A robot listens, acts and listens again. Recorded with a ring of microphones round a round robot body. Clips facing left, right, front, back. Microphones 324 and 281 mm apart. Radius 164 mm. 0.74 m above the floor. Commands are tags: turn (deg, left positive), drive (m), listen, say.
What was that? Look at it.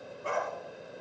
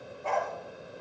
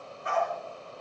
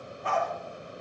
<turn deg="160"/>
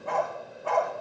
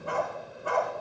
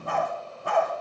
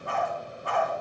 <turn deg="-20"/>
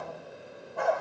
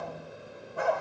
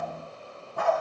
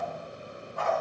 <turn deg="-10"/>
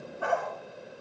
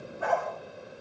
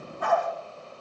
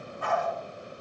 <say>Found it: a dog barking, straight ahead.</say>